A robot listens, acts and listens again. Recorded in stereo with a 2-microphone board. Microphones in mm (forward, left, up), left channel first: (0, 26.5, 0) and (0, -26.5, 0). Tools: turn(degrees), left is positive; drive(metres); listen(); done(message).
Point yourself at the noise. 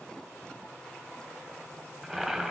turn(degrees=-30)
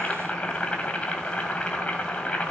turn(degrees=25)
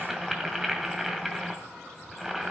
done("Found it: boiling, straight ahead.")